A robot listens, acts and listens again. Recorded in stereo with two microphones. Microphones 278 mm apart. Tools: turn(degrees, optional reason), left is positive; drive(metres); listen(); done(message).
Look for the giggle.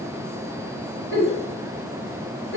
turn(degrees=45, reason="The giggle: about 45° left or 135° left.")
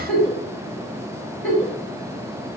done("Facing the giggle.")